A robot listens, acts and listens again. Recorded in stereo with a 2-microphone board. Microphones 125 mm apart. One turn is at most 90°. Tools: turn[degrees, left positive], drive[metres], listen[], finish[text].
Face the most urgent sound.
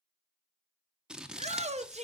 Thought: The shout: about 70° right or 110° right.
Action: turn[-70]
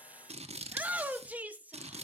Thought: So it is at 15° right.
Action: turn[-15]
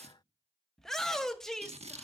Action: finish[Facing the shout.]